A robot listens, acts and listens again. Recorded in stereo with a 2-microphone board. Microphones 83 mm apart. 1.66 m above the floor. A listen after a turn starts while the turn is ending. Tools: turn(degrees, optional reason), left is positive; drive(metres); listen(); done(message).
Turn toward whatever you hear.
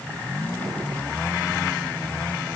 listen()
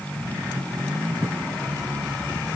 listen()
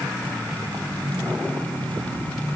done("I can't make out anything.")